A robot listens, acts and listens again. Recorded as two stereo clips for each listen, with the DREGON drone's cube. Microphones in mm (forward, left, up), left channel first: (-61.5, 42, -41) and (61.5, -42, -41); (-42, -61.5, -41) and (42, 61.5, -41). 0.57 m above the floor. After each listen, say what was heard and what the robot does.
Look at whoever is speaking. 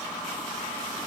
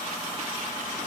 Keep listening.
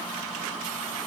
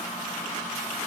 Keep listening.
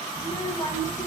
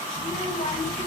The child speaking: 150° right. Turn 150° right.
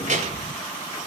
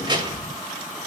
Found it: a child speaking, straight ahead, 1 to 2 m away.